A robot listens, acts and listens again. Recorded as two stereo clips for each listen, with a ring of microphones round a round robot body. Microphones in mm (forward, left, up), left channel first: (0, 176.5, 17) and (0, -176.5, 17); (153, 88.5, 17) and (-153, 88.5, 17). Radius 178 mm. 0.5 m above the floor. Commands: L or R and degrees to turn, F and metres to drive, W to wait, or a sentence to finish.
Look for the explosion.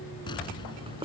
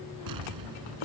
L170
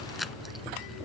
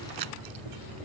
Facing where the explosion came from. I can't hear it now.